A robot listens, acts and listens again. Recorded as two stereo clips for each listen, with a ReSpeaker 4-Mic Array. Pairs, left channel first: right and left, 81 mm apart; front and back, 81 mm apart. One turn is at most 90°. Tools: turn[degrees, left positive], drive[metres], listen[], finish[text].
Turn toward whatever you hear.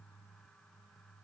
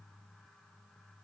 Action: listen[]
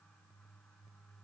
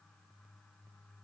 Action: listen[]
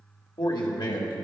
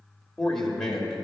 Thought: The man speaking: 85° right.
Action: turn[-85]
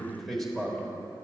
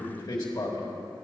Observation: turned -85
Action: finish[Facing the man speaking.]